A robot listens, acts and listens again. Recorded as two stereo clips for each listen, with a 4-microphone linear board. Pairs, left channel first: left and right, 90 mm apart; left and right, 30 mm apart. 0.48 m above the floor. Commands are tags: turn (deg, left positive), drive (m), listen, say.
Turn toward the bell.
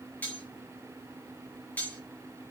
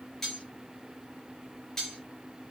<listen/>
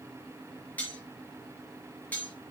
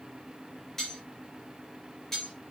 <listen/>
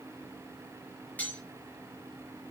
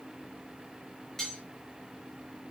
<say>I can't make out a bell, only cutlery clinking.</say>